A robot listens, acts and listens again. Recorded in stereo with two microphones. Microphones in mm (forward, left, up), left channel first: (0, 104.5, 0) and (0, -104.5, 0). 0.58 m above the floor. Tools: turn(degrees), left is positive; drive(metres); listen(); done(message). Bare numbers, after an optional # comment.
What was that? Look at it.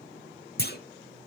# The clunk: about 50° left or 130° left.
turn(50)
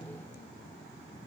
listen()
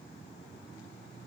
done("I heard a clunk, but can't make it out now. It was about straight ahead or 80° left.")